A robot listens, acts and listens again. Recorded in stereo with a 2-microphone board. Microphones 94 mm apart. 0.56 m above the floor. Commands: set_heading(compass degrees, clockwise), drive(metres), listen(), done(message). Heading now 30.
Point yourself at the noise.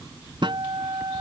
set_heading(85)
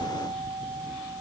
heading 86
set_heading(151)
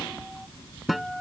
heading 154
done("Found it: a guitar, straight ahead.")